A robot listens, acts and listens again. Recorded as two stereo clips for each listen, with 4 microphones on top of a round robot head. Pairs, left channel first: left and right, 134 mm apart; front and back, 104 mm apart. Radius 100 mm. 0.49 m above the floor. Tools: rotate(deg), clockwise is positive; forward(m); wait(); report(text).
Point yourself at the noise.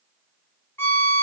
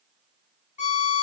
rotate(-15)
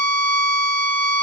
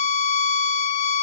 report("Facing the violin, 1 to 2 m away.")